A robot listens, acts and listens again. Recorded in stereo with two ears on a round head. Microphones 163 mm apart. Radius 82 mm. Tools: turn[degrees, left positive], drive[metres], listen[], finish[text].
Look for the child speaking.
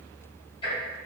Action: listen[]
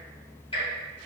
Action: listen[]
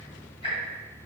Action: finish[I can't make out a child speaking, only ticking.]